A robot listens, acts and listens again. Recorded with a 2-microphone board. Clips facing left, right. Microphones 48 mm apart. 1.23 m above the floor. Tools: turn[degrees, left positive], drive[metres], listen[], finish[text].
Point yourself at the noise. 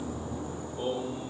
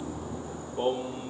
Thought: The singing: about 30° right or 150° right.
Action: turn[-30]
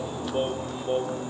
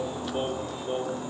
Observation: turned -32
Thought: So it is at 15° left.
Action: turn[15]
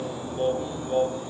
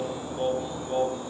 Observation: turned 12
Thought: The singing is now 10° left.
Action: turn[10]
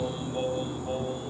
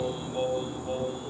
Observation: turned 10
Action: finish[Found it: singing, straight ahead, over 4 m away.]